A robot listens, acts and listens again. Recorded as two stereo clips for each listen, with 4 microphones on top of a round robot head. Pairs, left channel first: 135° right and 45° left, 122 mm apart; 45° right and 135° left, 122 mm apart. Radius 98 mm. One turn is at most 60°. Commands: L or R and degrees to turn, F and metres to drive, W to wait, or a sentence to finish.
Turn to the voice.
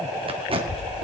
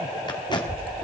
L60
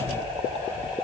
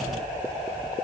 L60
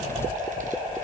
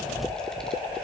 L40
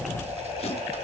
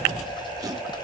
W
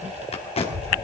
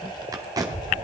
L10
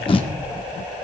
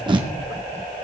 W
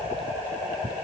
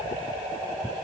W
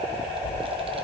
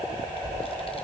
Found it: a child speaking, straight ahead, 2 to 4 m away.